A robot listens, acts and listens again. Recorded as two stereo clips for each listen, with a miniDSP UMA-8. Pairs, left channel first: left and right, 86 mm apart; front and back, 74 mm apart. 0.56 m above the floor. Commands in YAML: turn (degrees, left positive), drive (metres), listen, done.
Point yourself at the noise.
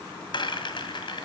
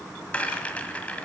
turn: 70
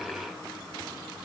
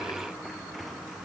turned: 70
listen: true
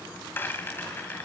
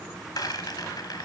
turn: 25
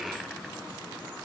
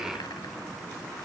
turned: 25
listen: true
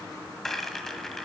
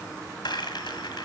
done: "Facing the rattle."